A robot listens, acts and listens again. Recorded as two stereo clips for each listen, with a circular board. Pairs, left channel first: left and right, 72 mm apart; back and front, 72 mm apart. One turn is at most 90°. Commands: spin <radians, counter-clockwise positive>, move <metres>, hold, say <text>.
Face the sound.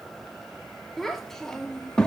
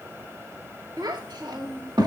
spin 0.17
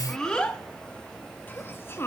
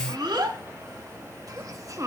spin 0.70
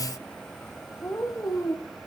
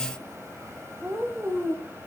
spin 0.87
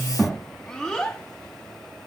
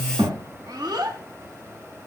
spin 0.17
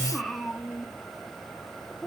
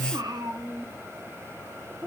say Facing the child speaking, 1 to 2 m away.